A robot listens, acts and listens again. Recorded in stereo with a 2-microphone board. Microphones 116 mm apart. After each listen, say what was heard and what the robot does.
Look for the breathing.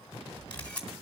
The breathing: about 35° right or 145° right. Turn 35° right.
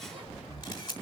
Found it: breathing, straight ahead.